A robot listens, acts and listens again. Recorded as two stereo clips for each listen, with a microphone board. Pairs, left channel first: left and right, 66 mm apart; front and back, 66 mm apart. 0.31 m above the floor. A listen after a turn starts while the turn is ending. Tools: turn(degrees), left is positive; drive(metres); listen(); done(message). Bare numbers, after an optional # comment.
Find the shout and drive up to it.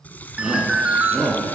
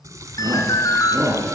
# The shout: 170° right.
turn(-170)
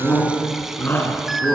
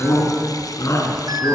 # The shout is now 35° left.
turn(35)
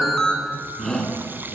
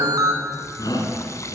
drive(1.0)
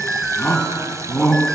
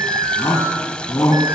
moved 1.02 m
# The shout is now 15° left.
turn(15)
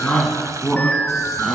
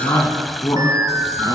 drive(1.0)
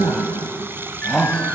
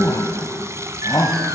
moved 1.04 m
drive(1.0)
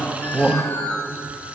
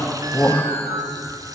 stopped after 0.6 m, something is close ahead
# The shout is now 15° right.
turn(-15)
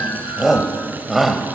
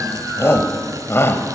done("I am next to the shout.")